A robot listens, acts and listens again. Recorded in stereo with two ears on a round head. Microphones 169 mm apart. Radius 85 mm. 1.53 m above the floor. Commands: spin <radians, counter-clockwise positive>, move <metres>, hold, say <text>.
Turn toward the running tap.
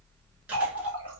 spin 0.44
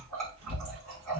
say Found it: a running tap, straight ahead, 1 to 2 m away.